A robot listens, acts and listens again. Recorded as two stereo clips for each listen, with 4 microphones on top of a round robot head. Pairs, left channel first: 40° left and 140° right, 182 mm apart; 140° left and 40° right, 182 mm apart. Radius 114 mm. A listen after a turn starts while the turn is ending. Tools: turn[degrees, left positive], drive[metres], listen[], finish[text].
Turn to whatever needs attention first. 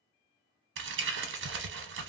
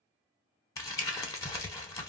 Action: listen[]
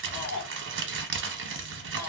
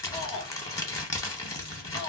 Thought: The shout: 75° left.
Action: turn[75]
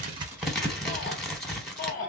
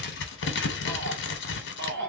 Thought: The shout is now 10° right.
Action: turn[-10]
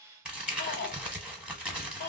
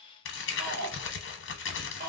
Action: finish[Found it: a shout, straight ahead.]